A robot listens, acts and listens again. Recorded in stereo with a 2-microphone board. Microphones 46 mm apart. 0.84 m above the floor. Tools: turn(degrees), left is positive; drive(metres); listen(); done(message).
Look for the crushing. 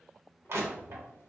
turn(degrees=-60)
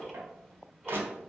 turn(degrees=-55)
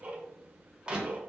turn(degrees=-20)
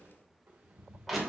done("Found it: crushing, straight ahead, 1 to 2 m away.")